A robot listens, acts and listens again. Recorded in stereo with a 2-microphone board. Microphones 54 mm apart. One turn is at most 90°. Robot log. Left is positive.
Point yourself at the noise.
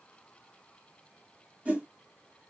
note: The whoosh: about 25° right or 155° right.
cmd yaw -25
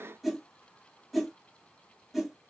end: Found it: a whoosh, straight ahead, 1 to 2 m away.